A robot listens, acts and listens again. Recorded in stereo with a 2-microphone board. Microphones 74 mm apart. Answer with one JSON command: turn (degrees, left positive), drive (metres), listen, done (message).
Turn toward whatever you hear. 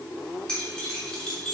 {"turn": 30}
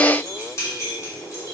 {"turn": 140}
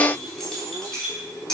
{"turn": 10}
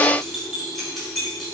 {"done": "Found it: keys jangling, straight ahead, 2 to 4 m away."}